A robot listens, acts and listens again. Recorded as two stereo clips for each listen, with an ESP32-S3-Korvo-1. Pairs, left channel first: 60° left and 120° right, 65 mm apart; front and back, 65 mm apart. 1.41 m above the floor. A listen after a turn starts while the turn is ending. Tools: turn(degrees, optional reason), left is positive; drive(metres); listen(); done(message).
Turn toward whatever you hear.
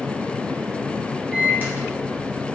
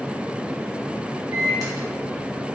turn(degrees=180, reason="The microwave: straight behind.")
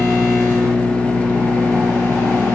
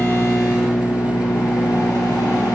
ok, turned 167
turn(degrees=10, reason="The microwave is now 10° left.")
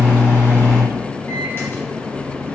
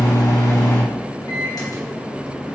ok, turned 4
done("Facing the microwave.")